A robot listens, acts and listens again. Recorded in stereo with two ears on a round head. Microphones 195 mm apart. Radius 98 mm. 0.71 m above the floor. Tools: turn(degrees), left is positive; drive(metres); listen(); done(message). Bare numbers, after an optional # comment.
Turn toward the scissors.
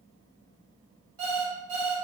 listen()
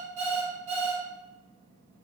listen()
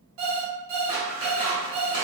# The scissors: about 20° right or 160° right.
turn(-20)
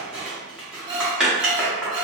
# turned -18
done("Found it: scissors, straight ahead.")